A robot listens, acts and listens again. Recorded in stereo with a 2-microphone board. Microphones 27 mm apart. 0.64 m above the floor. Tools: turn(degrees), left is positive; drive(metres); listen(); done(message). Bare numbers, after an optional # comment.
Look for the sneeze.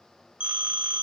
listen()
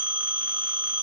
listen()
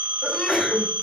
# The sneeze: about 20° left or 160° left.
turn(20)
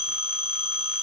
listen()
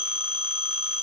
done("I heard a sneeze, but can't make it out now. It was about straight ahead or 140° left.")